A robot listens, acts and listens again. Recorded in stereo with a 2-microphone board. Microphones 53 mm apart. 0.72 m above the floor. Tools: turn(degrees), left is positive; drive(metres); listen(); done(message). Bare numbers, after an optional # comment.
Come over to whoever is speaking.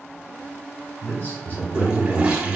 # The man speaking: about 40° left or 140° left.
turn(40)
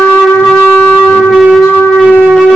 listen()
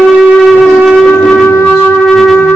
listen()
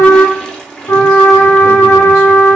done("I heard a man speaking, but can't make it out now. It was about straight ahead or 100° left. I did not reach it.")